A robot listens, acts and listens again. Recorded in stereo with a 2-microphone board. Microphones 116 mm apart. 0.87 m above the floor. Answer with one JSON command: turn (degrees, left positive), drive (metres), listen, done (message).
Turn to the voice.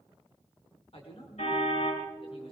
{"turn": 50}
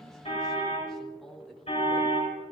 {"done": "Facing the man speaking, 2 to 4 m away."}